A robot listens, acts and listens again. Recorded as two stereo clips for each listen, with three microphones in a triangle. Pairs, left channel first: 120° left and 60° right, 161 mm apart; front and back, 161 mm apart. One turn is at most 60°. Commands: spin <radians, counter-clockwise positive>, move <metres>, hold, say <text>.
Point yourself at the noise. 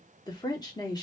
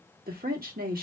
spin -1.05
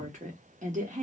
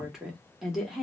spin -1.05
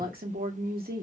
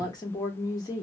spin -1.05
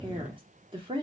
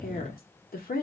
say Facing the woman speaking.